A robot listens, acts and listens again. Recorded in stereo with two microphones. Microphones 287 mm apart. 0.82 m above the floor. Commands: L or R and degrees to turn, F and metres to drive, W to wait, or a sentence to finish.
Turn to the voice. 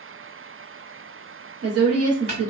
R55
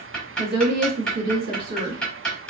R65
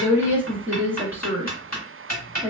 Found it: a woman speaking, straight ahead, 1 to 2 m away.